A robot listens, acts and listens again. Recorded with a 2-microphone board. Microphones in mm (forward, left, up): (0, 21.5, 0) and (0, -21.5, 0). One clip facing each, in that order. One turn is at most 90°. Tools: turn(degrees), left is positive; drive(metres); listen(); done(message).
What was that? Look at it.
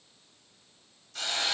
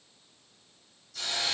turn(degrees=50)
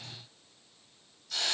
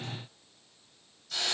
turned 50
done("Facing the hiss.")